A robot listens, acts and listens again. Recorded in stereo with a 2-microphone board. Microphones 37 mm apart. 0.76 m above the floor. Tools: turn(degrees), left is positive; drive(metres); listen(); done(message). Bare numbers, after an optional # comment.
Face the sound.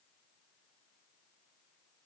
listen()
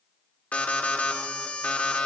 # The alarm: about 40° left or 140° left.
turn(40)
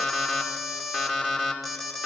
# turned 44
done("Found it: an alarm, straight ahead, 2 to 4 m away.")